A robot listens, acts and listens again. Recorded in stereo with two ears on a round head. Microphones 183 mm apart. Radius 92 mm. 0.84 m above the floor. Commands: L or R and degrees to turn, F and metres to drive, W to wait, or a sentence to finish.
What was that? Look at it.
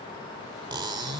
R20
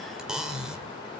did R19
Found it: cutlery clinking, straight ahead.